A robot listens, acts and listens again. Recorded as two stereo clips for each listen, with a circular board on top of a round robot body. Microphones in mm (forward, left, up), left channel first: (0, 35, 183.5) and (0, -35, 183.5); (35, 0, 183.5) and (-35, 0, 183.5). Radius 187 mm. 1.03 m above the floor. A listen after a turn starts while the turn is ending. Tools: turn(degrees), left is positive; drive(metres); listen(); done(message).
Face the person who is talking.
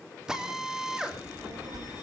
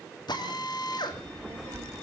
turn(degrees=-120)
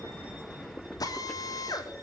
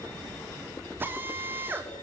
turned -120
turn(degrees=10)
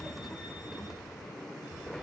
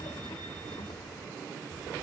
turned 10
done("Found it: a child speaking, straight ahead, 2 to 4 m away.")